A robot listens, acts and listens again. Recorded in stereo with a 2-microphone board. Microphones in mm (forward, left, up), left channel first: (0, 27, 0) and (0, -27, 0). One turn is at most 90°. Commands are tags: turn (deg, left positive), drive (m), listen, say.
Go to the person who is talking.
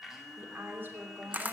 <turn deg="-40"/>
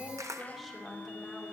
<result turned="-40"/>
<drive m="1.0"/>
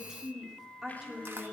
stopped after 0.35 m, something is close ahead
<turn deg="-10"/>
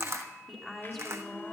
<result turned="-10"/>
<say>Something is in my way. I am facing the woman speaking but have not reached it.</say>